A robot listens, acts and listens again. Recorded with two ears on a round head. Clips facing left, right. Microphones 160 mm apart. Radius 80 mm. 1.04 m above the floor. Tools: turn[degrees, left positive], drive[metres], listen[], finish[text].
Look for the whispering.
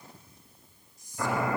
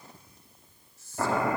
Action: turn[30]
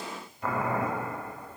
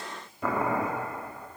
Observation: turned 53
Action: listen[]
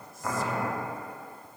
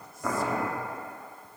Action: listen[]
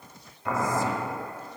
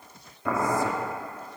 Action: finish[I heard whispering, but can't make it out now. It was about 40° right or 115° left.]